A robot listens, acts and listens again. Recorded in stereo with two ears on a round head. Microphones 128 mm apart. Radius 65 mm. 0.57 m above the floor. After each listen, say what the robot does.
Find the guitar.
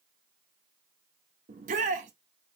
Keep listening.
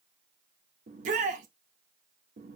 Keep listening.
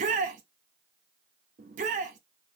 I can't make out a guitar, only a shout.